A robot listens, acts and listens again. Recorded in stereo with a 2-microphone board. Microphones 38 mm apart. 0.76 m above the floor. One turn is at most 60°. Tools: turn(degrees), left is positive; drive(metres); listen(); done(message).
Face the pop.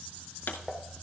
turn(degrees=60)
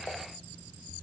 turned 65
listen()
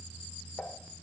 done("I heard a pop, but can't make it out now. It was about 10° left or 40° left.")